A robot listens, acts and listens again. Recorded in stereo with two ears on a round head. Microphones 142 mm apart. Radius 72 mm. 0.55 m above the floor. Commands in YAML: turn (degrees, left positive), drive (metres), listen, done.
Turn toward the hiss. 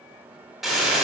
turn: 30
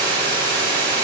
turn: -35
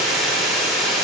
done: "Found it: a hiss, straight ahead."